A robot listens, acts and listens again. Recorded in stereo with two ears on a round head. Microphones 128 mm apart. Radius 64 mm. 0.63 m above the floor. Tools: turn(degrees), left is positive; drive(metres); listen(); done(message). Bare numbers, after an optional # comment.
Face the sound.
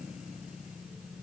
listen()
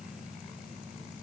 listen()
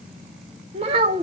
# The child speaking: about 35° right or 145° right.
turn(-35)
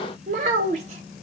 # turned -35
# So it is at 130° right.
turn(-130)
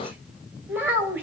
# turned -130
# The child speaking is now 15° right.
turn(-15)
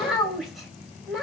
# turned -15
done("Found it: a child speaking, straight ahead, 2 to 4 m away.")